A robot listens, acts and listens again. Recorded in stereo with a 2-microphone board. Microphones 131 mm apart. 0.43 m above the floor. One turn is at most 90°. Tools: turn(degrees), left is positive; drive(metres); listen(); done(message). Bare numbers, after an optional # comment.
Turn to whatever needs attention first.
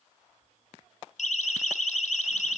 # The siren: about 70° left or 110° left.
turn(70)
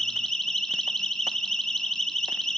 done("Facing the siren, 2 to 4 m away.")